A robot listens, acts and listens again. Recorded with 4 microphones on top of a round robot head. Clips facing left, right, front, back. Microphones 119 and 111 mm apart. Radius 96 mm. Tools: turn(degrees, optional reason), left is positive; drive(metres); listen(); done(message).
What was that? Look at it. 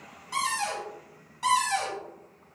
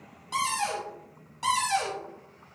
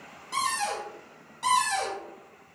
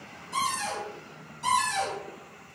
turn(degrees=-25, reason="The cupboard door: 25° right.")
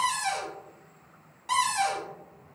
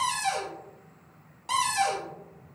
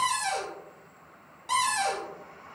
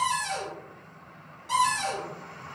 turn(degrees=-25, reason="The cupboard door is now 25° right.")
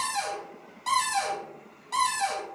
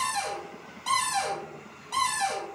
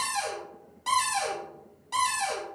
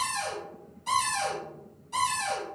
done("Facing the cupboard door, 1 to 2 m away.")